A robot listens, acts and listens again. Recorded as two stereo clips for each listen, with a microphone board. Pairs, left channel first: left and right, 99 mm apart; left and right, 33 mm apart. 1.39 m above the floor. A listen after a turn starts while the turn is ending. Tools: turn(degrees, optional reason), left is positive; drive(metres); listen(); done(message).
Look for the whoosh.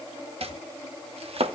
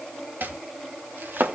listen()
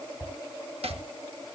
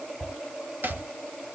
turn(degrees=-20, reason="The whoosh: about 20° right or 160° right.")
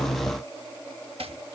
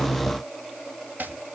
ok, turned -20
listen()
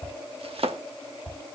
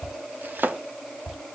done("Facing the whoosh, over 4 m away.")